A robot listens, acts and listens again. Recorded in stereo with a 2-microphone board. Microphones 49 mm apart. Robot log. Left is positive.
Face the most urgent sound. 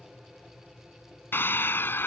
note: The scream: about 50° left or 130° left.
cmd yaw +50
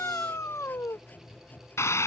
note: So it is at 80° left.
cmd yaw +80
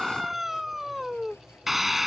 end: Found it: a scream, straight ahead.